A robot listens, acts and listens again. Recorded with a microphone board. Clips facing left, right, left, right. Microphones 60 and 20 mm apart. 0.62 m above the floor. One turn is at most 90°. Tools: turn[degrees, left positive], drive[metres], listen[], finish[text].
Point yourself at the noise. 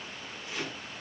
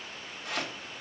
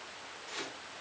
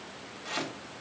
Thought: The chopping: about 60° right or 120° right.
Action: turn[-60]
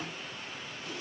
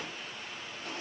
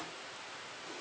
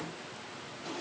Thought: So it is at 55° right.
Action: turn[-55]
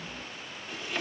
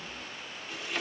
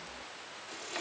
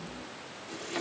Action: finish[Found it: chopping, straight ahead.]